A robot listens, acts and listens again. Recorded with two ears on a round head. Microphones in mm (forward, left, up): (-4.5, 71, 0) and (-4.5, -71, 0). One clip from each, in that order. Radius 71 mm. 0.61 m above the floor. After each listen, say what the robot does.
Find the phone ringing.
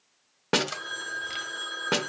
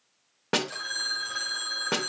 Turn 60° right.
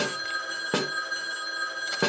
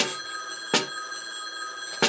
Facing the phone ringing.